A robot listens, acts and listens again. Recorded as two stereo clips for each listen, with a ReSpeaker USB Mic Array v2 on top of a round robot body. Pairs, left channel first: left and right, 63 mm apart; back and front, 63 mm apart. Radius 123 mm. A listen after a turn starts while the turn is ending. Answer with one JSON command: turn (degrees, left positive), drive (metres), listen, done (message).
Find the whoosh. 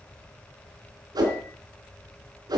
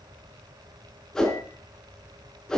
{"turn": -100}
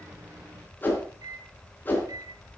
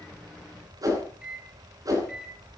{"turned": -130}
{"turn": 30}
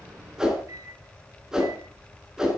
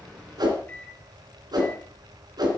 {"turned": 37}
{"turn": -10}
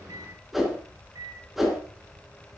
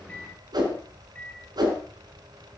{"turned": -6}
{"done": "Facing the whoosh, 2 to 4 m away."}